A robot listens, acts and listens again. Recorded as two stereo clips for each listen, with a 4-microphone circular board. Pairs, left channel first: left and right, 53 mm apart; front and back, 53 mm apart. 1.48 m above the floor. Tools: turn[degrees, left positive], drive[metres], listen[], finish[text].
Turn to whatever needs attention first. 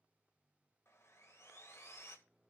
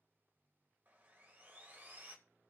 Action: listen[]
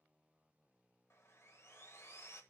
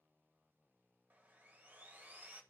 Action: listen[]
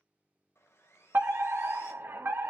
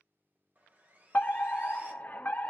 Thought: The fire alarm: 55° right.
Action: turn[-55]
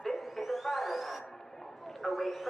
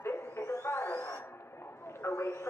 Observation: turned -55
Action: finish[Facing the fire alarm.]